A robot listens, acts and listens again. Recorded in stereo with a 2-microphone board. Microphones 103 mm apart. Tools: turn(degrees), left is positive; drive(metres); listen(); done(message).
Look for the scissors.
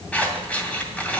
turn(degrees=30)
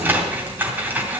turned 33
turn(degrees=-20)
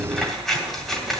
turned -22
done("Found it: scissors, straight ahead, 2 to 4 m away.")